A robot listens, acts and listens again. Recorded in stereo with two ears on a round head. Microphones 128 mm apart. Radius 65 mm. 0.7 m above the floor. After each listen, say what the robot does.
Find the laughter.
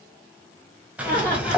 Turn 30° left.
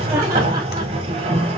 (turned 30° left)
Turn 25° right.
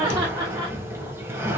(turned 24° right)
Turn 25° right.
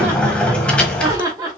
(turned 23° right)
Turn 25° right.
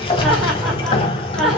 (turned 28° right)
Found it: laughter, straight ahead, 2 to 4 m away.